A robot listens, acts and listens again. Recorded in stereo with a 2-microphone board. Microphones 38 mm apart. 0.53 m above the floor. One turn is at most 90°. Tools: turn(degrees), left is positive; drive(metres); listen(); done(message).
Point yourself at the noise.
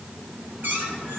turn(degrees=-55)
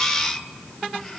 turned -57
listen()
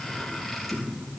done("Facing the squeak, 2 to 4 m away.")